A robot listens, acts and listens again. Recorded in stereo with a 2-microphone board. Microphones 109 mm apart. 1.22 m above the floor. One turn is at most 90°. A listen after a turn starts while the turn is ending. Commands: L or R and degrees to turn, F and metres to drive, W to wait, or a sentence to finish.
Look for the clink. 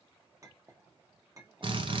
R30
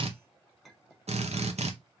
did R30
Facing the clink, under 1 m away.